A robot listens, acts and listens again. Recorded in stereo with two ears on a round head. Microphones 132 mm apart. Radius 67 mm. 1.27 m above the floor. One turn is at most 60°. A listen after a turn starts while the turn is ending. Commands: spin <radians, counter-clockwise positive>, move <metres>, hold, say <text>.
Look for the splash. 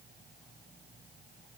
hold
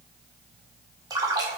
spin -0.44
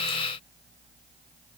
hold
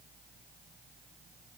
say I heard a splash, but can't make it out now. It was about straight ahead or 130° right.